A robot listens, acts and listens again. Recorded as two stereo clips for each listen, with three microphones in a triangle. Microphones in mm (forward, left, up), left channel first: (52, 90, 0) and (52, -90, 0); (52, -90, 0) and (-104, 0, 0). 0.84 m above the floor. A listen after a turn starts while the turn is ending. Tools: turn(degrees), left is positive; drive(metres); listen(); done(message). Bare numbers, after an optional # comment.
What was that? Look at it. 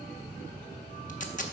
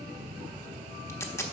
# The tape being pulled: 45° left.
turn(45)
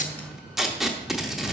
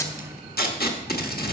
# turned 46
done("Facing the tape being pulled, 1 to 2 m away.")